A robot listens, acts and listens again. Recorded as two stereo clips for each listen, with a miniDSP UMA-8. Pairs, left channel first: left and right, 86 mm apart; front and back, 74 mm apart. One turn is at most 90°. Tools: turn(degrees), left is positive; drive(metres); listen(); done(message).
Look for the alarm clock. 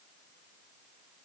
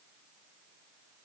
listen()
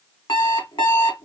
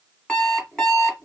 turn(degrees=80)
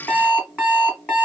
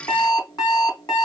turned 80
turn(degrees=15)
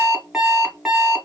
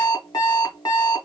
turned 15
done("Found it: an alarm clock, straight ahead.")